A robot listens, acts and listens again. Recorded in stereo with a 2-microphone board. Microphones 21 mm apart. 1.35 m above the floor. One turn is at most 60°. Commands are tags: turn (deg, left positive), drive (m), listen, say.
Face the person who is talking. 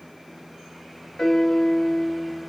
<listen/>
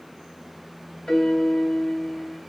<listen/>
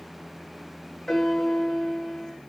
<say>I can't make out anyone speaking, only a piano.</say>